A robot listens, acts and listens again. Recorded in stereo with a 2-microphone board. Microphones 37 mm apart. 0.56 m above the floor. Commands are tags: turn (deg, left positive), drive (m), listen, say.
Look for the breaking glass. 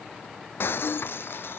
<turn deg="75"/>
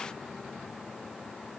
<listen/>
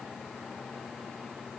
<say>I heard breaking glass, but can't make it out now. It was about straight ahead or 30° left.</say>